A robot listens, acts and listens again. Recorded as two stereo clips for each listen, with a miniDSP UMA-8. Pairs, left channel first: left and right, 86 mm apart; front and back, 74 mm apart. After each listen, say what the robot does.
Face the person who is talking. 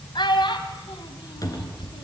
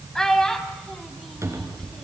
Turn 80° left.
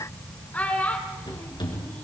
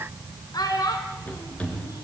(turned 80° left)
Turn 20° left.
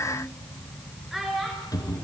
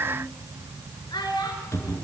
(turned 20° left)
Found it: a child speaking, straight ahead, over 4 m away.